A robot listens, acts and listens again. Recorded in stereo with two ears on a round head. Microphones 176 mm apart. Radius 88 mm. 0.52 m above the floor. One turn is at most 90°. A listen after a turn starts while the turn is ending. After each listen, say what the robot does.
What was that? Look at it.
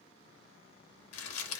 Turn 90° left.
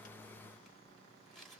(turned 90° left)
Keep listening.
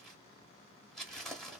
Facing the crumpling, under 1 m away.